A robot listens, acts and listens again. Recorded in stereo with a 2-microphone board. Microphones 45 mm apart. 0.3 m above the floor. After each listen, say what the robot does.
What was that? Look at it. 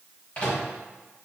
Turn 25° left.
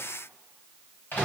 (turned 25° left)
Turn 120° left.
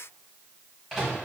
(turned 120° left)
Facing the microwave.